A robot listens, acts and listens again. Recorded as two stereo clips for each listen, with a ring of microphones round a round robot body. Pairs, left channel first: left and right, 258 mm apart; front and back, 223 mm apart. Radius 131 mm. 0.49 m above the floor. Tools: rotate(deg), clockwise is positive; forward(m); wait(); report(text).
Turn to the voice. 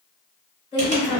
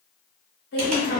rotate(-25)
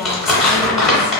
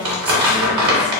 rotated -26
wait()
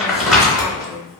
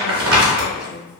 wait()
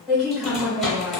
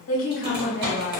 report("Found it: a woman speaking, straight ahead, 1 to 2 m away.")